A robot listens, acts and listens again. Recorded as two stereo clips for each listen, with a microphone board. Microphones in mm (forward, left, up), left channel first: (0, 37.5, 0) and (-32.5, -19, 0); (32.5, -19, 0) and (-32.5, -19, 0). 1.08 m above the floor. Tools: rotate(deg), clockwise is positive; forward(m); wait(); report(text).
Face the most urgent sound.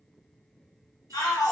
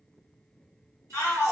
rotate(-45)
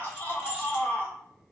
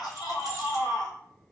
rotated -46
report("Facing the shout.")